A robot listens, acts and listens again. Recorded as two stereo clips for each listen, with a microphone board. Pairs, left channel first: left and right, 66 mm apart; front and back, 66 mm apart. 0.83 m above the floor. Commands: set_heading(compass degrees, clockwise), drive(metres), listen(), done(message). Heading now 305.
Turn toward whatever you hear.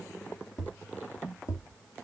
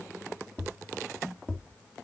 set_heading(235)
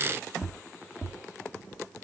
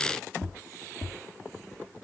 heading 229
done("Facing the tapping.")